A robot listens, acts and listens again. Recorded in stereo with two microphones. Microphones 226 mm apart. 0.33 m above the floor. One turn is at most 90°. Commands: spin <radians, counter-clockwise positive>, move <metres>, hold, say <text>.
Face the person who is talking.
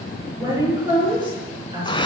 spin -0.35
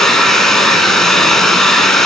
hold
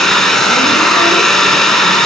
hold
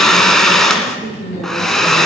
spin -0.52
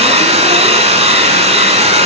hold
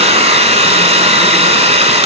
hold
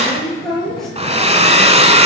say Facing the woman speaking, over 4 m away.